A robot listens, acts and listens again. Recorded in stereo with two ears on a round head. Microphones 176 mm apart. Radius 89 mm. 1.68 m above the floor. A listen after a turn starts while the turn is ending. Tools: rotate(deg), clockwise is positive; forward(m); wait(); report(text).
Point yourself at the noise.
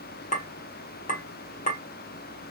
rotate(-40)
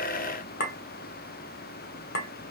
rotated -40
rotate(-90)
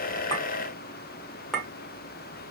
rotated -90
report("Found it: a clink, straight ahead.")